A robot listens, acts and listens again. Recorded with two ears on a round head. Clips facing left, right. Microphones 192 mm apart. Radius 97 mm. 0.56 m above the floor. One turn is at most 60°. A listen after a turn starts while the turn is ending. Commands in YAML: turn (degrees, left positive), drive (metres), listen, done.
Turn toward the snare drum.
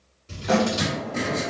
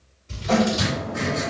turn: 60
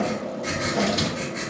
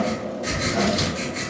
listen: true
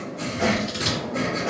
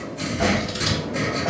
listen: true
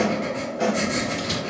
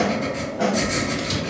turn: 30
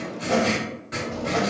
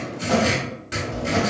done: "Facing the snare drum."